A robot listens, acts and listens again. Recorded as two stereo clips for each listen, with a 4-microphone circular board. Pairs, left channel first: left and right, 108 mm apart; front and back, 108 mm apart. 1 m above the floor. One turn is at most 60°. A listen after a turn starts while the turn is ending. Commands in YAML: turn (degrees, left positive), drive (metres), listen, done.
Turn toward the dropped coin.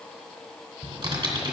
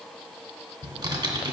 listen: true
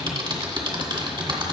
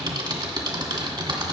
listen: true
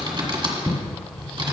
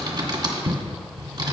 done: "I can't make out a dropped coin, only typing on a keyboard."